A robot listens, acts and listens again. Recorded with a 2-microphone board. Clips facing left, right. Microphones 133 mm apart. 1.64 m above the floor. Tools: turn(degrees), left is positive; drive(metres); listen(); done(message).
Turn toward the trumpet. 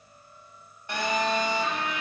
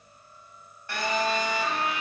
turn(degrees=-25)
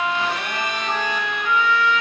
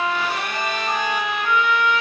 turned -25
turn(degrees=-125)
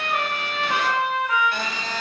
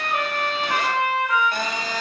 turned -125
done("Found it: a trumpet, straight ahead, 1 to 2 m away.")